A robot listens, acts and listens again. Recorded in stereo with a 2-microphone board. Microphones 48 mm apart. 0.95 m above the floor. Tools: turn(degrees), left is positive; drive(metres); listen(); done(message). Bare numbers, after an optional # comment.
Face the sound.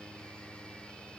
listen()
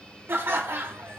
# The laughter: about 50° right or 130° right.
turn(-50)
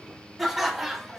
done("Facing the laughter, under 1 m away.")